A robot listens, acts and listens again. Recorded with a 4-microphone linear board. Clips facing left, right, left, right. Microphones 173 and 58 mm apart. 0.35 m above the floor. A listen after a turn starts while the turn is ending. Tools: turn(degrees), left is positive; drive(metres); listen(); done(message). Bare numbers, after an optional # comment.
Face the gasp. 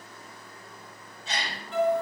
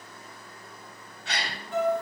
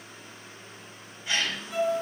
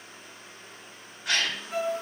# The gasp: about 70° right or 110° right.
turn(-70)
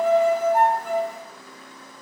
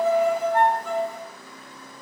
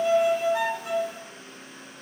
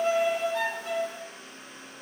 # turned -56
listen()
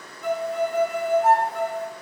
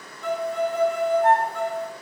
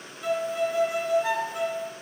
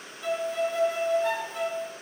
done("I heard a gasp, but can't make it out now. It was about 15° right or 50° right.")